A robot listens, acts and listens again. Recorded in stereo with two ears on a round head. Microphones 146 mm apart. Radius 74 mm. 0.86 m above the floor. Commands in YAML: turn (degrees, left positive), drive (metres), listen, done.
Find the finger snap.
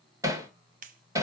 turn: -55
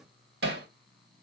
listen: true
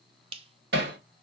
turn: -45
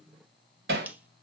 listen: true
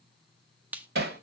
turn: -10
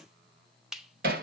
done: "Facing the finger snap, under 1 m away."